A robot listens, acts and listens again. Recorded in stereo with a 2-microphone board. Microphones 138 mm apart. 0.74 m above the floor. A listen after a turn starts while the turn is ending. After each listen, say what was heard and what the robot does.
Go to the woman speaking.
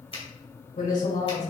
Turn 90° left.
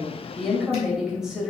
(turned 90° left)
Drive 1.0 m forward.
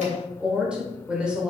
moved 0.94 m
Drive 1.0 m forward.
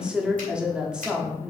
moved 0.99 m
Drive 1.0 m forward.
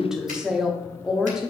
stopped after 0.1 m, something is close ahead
Arrived at the woman speaking, straight ahead.